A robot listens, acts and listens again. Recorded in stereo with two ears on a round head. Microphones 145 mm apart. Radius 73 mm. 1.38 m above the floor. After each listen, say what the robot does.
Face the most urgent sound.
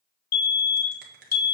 Turn 60° left.
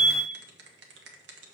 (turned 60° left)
Turn 30° left.
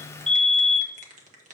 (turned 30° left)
Facing the fire alarm.